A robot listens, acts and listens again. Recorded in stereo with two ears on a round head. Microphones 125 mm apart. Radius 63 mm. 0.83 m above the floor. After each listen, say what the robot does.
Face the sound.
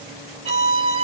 Turn 40° right.
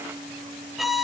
Found it: a violin, straight ahead, 1 to 2 m away.